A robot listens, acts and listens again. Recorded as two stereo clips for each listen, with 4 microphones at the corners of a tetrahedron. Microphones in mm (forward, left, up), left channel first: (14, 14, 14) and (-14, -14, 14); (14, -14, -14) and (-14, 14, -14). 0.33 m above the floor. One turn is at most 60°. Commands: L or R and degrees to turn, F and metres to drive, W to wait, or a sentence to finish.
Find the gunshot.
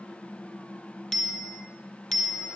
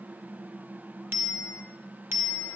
W
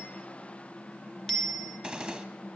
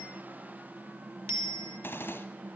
R60
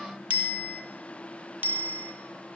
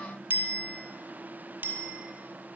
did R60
R10
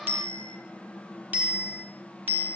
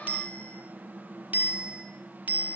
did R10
I heard a gunshot from this way, but can't make it out now.